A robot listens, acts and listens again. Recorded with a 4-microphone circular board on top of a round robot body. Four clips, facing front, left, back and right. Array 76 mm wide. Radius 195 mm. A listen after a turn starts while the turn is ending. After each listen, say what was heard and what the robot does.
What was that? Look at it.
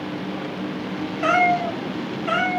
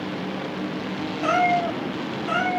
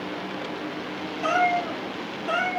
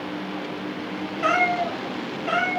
The cat meowing: 25° right. Turn 25° right.
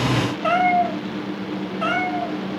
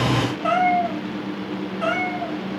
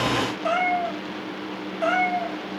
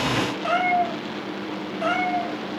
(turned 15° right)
Found it: a cat meowing, straight ahead.